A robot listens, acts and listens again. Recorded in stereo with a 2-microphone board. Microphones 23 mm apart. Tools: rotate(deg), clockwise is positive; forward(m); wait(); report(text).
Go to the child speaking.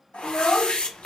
rotate(-50)
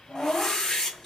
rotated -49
rotate(-75)
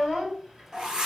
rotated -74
forward(1.0)
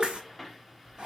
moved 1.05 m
wait()
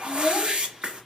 forward(1.0)
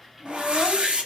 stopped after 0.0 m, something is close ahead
wait()
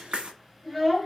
report("I am next to the child speaking.")